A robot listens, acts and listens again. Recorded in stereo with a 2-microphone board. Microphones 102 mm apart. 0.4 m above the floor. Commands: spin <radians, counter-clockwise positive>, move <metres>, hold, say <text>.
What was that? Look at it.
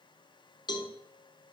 spin 0.79
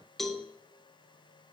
say Found it: a cowbell, straight ahead.